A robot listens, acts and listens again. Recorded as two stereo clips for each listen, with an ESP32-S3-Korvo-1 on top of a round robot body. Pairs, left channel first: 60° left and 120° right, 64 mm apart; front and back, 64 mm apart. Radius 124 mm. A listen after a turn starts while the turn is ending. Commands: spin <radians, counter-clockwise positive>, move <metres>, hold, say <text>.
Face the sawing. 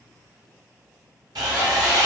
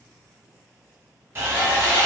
spin -2.09
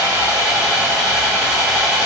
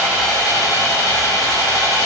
spin -0.61
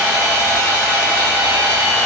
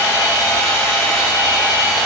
say Facing the sawing, 1 to 2 m away.